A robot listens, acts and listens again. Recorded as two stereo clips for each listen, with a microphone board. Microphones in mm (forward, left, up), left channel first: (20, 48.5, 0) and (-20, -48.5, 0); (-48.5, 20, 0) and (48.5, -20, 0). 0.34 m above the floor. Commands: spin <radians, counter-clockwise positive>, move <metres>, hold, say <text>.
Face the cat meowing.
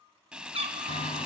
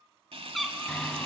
spin -2.01
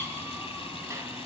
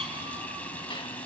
hold
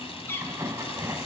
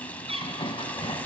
say Found it: a cat meowing, straight ahead.